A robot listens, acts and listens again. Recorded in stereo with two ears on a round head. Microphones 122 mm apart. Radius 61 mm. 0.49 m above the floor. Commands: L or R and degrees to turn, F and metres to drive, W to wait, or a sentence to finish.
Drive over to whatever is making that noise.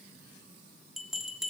L30
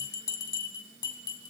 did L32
L150
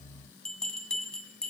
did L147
F1.0
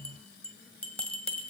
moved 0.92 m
L10
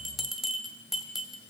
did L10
F1.0
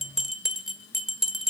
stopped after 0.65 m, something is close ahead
I am next to the bell.